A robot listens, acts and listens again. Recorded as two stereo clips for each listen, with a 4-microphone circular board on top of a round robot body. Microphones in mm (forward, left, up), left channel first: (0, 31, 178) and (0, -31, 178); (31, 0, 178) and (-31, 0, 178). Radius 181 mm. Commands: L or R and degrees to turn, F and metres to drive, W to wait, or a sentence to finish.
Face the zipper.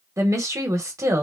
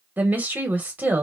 W
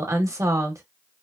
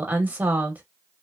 W
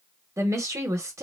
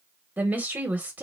I can't make out a zipper to turn to.